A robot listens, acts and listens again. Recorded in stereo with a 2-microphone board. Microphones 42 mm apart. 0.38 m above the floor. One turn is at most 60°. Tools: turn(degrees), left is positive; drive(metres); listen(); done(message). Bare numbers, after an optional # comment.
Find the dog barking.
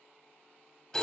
listen()
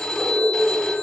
turn(60)
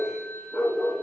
# So it is at 20° left.
turn(20)
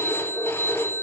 done("Facing the dog barking, over 4 m away.")